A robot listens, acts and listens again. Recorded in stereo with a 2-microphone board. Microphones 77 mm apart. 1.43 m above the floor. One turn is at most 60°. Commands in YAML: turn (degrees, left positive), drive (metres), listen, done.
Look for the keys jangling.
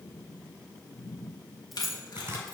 turn: 30
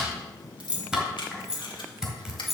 turn: 30
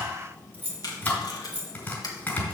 turn: -20
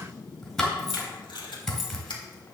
listen: true
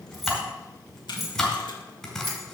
done: "Facing the keys jangling, 2 to 4 m away."